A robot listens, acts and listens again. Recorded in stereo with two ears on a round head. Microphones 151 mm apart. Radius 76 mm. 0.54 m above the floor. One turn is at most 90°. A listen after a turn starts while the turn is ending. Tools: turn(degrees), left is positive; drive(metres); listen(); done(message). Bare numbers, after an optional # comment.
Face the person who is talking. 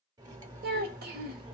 # The child speaking: about 60° right or 120° right.
turn(-60)
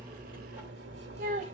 # So it is at 50° right.
turn(-50)
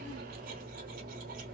listen()
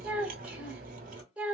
# The child speaking is now 10° right.
turn(-10)
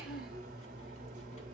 listen()
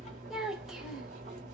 done("Found it: a child speaking, straight ahead, 1 to 2 m away.")